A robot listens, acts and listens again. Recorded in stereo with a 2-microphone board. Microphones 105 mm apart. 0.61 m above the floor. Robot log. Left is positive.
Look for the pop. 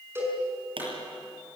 note: The pop: about 60° right or 120° right.
cmd yaw -60
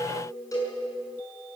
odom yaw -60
cmd idle
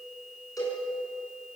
end: I heard a pop, but can't make it out now. It was about straight ahead or 60° right.